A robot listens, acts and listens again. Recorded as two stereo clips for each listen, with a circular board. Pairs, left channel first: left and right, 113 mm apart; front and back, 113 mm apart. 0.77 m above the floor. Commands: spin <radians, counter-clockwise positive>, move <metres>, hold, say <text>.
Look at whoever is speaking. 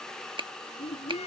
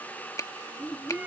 spin 1.31
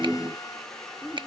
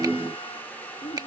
say Facing the child speaking.